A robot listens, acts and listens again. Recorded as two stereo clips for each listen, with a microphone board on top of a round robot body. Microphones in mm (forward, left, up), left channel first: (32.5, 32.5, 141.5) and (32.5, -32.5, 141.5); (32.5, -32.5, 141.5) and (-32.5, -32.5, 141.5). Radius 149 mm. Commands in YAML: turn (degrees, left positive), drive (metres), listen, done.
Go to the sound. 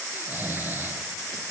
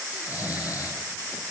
turn: -30
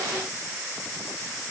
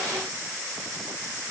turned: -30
listen: true
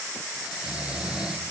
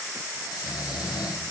turn: -15
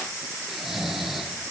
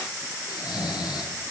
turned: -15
drive: 1.0
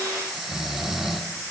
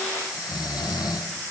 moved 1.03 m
drive: 1.0
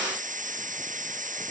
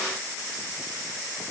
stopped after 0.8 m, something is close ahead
listen: true
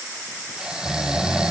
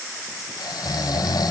turn: -10
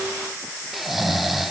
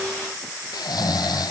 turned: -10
done: "Arrived at the snoring, straight ahead."